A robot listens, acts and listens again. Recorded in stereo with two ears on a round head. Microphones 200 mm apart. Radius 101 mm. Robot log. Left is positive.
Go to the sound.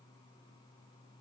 cmd idle
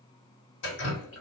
note: The dripping: about 60° left or 120° left.
cmd yaw +60
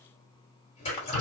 note: So it is at 35° left.
cmd yaw +35
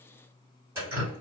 note: The dripping is now 15° right.
cmd yaw -15
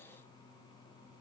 cmd idle
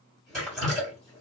cmd fwd 1.0
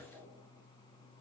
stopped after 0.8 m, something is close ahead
cmd idle
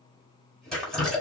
end: Arrived at the dripping, straight ahead.